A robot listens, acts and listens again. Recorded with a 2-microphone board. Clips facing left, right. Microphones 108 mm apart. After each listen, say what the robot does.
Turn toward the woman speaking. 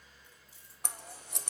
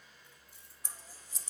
Keep listening.
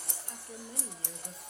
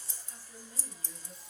Turn 60° left.
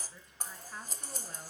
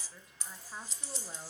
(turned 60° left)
Turn 15° right.
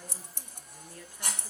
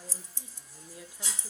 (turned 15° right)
Turn 15° right.
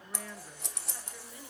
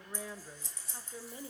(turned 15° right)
Turn 25° right.
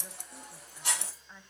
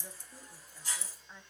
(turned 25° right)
Found it: a woman speaking, straight ahead.